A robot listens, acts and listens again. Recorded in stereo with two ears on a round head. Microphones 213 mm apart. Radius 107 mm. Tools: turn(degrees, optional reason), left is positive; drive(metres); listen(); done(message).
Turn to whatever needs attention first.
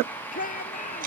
turn(degrees=35, reason="The shout: about 35° left or 145° left.")
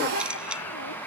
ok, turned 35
listen()
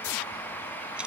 listen()
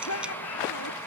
turn(degrees=110, reason="So it is at 110° left.")
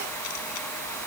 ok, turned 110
listen()
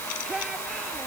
done("Facing the shout.")